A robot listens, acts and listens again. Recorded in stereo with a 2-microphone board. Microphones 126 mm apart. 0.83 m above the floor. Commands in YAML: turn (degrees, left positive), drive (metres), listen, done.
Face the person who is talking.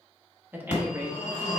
turn: -15
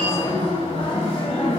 listen: true
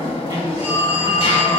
listen: true
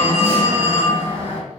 done: "I heard a woman speaking, but can't make it out now. It was about straight ahead or 150° right."